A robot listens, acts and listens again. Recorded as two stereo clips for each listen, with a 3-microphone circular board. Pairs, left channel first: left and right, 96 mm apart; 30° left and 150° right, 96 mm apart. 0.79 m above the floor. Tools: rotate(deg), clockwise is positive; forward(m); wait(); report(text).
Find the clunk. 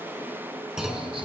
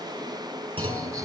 rotate(175)
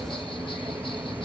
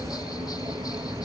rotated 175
report("I heard a clunk from this way, but can't make it out now.")